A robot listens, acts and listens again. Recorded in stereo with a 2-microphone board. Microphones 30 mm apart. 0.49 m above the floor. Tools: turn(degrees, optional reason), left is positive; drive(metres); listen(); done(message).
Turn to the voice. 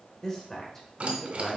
turn(degrees=30)
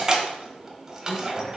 listen()
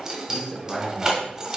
turn(degrees=-20, reason="So it is at 20° right.")
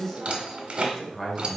done("Found it: a man speaking, straight ahead, 1 to 2 m away.")